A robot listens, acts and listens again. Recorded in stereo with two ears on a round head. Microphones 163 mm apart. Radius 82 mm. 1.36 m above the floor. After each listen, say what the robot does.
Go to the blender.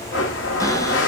Turn 90° left.
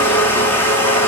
Turn 10° left.
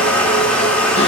Drive 1.0 m forward.
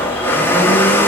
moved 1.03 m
Turn 10° left.
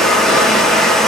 Drive 1.0 m forward.
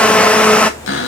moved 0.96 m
Drive 1.0 m forward.
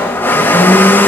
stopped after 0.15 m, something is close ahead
Turn 10° left.
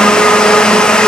I am next to the blender.